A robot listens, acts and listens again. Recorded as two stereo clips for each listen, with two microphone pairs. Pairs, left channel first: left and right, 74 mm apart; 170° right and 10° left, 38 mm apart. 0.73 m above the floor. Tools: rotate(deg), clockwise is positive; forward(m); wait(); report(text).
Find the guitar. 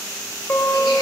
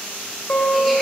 rotate(-160)
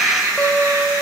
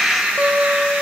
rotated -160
rotate(-10)
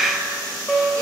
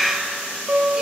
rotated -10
report("Found it: a guitar, straight ahead.")